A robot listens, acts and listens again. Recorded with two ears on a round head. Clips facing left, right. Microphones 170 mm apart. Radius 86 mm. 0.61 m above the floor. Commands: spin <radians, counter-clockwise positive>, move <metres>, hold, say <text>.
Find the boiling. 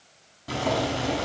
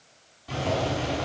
spin 1.05
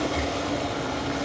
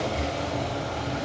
spin 0.96
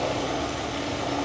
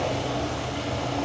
spin 0.17
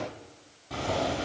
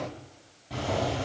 say Found it: boiling, straight ahead, over 4 m away.